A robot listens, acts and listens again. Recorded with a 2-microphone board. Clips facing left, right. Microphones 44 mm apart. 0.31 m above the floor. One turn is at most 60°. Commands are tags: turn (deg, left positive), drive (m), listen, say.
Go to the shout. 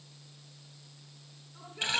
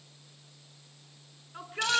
<turn deg="-60"/>
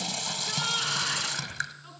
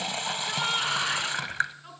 <turn deg="-15"/>
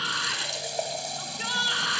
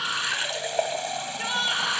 <drive m="1.0"/>
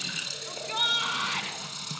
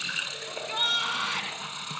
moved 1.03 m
<drive m="1.0"/>
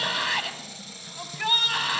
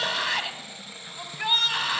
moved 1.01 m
<drive m="1.0"/>
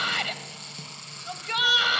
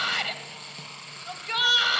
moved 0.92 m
<drive m="1.0"/>
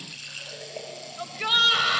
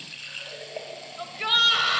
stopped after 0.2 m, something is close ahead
<say>I am next to the shout.</say>